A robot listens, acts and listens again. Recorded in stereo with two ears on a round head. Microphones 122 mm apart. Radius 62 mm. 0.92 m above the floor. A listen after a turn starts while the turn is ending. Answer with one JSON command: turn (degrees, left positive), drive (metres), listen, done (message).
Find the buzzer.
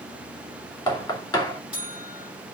{"turn": -30}
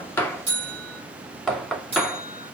{"turn": -140}
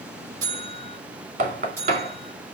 {"turn": -20}
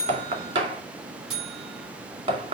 {"done": "Found it: a buzzer, straight ahead, over 4 m away."}